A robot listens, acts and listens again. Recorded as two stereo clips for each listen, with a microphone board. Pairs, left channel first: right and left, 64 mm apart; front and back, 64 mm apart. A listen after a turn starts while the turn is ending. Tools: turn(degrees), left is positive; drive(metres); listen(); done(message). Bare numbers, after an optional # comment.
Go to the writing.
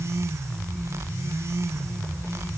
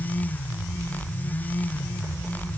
listen()
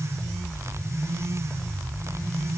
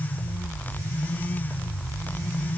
listen()
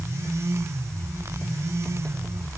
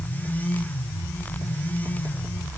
done("I can't make out writing.")